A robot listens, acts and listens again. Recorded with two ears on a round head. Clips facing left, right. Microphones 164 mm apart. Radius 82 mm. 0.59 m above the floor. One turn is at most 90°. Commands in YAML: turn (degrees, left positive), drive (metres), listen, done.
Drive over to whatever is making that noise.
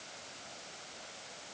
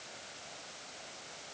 listen: true
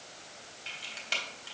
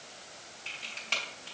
turn: 20
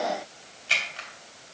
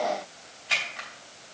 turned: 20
turn: 90
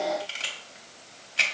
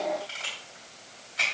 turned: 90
turn: 40
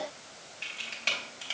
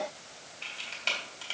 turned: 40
drive: 1.0
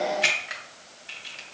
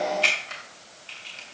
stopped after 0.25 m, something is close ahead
done: "Blocked. The camera shutter is further on, straight ahead."